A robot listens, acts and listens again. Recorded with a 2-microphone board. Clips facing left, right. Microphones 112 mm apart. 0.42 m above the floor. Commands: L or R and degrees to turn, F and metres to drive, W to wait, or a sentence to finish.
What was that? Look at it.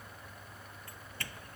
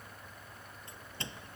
R20
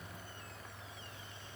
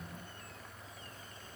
W
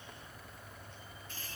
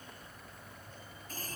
R140
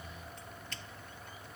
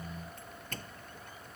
R50
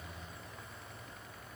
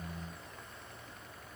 W
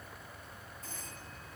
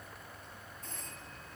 Found it: a doorbell, straight ahead.